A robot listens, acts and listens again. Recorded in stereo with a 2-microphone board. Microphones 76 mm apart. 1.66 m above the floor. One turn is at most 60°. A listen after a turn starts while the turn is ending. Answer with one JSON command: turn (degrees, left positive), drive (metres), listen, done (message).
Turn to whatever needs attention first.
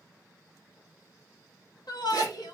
{"turn": 60}
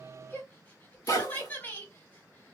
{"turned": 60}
{"turn": 25}
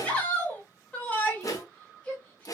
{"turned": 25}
{"turn": 20}
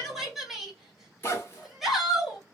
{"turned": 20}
{"done": "Found it: a shout, straight ahead."}